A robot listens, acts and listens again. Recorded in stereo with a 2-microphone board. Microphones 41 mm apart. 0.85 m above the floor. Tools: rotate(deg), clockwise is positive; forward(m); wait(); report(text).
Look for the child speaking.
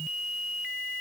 wait()
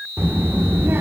rotate(70)
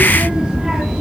rotate(15)
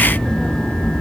rotate(-25)
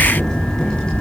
rotate(-25)
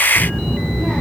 report("Facing the child speaking.")